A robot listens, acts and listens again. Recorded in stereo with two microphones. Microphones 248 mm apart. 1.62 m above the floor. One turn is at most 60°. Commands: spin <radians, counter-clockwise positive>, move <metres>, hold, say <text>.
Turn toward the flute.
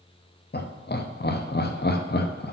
hold
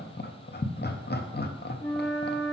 spin 0.52
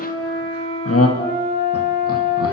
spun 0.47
spin 1.05
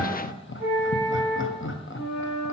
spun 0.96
spin 1.05
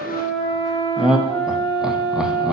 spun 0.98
spin 0.52
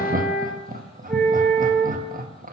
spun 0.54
say Facing the flute, 2 to 4 m away.